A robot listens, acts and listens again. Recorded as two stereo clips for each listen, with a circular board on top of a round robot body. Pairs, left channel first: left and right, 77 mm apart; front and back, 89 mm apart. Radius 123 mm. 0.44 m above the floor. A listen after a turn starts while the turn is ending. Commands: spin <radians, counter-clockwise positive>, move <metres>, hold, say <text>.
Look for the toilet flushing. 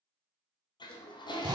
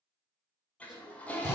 spin 1.31
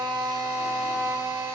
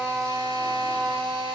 hold
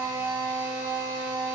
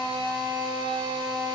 hold
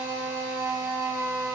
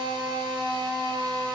say I heard a toilet flushing from this way, but can't make it out now.